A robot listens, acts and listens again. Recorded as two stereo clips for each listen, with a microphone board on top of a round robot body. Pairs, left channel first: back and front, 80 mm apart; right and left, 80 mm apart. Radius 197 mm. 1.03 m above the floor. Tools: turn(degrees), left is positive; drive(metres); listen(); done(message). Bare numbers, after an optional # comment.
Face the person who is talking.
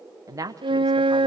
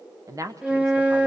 # The woman speaking: 45° left.
turn(45)
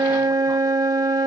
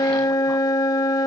listen()
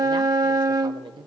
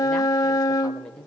# The woman speaking is now 10° right.
turn(-10)
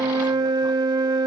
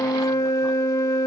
listen()
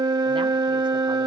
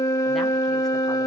listen()
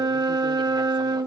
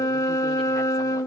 done("I heard a woman speaking from this way, but can't make it out now.")